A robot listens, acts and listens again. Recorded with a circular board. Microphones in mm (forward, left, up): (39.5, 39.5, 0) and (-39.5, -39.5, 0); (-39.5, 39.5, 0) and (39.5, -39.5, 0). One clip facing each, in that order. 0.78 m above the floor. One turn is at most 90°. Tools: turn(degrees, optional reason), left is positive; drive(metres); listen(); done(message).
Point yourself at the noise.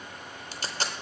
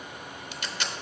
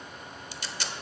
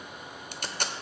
turn(degrees=-10, reason="The tape being pulled: 10° right.")
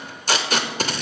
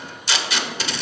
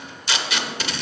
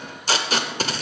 done("Facing the tape being pulled, under 1 m away.")